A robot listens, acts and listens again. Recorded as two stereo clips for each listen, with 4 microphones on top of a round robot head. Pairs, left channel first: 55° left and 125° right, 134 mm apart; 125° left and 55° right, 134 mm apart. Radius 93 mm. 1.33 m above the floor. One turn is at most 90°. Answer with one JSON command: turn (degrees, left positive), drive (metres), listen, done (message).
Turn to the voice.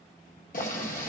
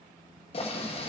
{"listen": true}
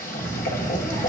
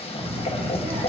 {"done": "Facing the child speaking, 2 to 4 m away."}